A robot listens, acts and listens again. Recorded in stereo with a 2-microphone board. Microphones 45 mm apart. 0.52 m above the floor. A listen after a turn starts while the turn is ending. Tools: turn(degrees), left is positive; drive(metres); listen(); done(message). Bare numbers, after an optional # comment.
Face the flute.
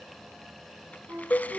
# The flute: about 50° right or 130° right.
turn(-50)
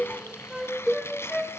done("Found it: a flute, straight ahead.")